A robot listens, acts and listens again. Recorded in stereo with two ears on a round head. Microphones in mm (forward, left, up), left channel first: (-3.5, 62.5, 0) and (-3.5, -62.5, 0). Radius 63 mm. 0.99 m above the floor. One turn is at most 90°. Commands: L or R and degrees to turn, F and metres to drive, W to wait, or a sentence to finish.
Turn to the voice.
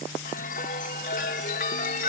W
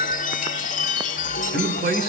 R90
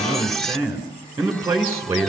R15
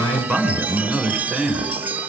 Facing the man speaking, over 4 m away.